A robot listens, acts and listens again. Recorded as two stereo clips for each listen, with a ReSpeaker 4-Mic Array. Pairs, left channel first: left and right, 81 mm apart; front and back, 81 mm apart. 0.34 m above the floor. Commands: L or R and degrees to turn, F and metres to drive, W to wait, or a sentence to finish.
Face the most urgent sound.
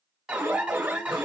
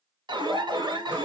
R170
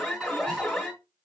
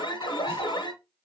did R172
Facing the alarm, 1 to 2 m away.